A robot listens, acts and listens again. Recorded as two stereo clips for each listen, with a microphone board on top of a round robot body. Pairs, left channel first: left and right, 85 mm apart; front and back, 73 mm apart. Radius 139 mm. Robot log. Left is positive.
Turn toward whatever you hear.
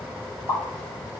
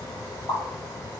note: The pop: 35° left.
cmd yaw +35
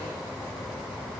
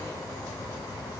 end: I heard a pop from this way, but can't make it out now.